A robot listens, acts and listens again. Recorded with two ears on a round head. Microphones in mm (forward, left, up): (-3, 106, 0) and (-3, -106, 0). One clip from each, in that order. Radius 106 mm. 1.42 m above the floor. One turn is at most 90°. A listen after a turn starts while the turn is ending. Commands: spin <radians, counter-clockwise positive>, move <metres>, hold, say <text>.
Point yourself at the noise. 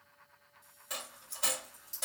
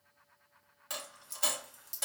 spin -0.35
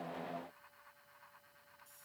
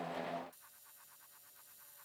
hold
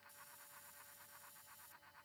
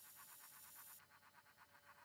say I heard a dropped coin, but can't make it out now. It was about straight ahead or 140° right.